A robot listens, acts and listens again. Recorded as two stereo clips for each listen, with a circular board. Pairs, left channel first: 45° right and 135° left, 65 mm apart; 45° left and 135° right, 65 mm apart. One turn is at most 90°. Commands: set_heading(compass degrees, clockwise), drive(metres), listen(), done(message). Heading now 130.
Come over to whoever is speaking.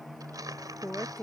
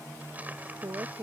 set_heading(220)
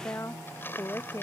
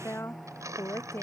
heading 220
drive(1.0)
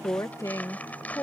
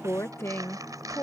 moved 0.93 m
drive(1.0)
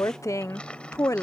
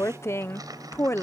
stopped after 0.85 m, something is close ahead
done("I am next to the woman speaking.")